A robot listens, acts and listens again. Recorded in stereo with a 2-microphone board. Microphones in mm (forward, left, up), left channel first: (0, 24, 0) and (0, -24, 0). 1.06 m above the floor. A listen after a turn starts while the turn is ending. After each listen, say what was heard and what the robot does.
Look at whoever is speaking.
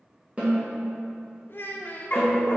The child speaking: about 45° left or 135° left. Turn 45° left.
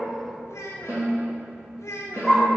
So it is at 90° left. Turn 90° left.
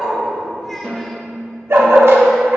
Keep listening.
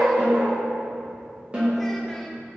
Keep listening.
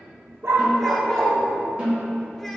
I heard a child speaking from this way, but can't make it out now.